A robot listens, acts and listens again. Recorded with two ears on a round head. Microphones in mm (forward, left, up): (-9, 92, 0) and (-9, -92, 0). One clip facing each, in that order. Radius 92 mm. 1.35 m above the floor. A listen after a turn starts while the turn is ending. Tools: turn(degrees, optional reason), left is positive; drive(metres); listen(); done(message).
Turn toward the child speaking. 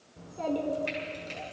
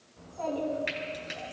turn(degrees=45, reason="The child speaking: about 45° left or 135° left.")
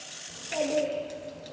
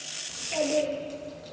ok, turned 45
done("Found it: a child speaking, straight ahead, 2 to 4 m away.")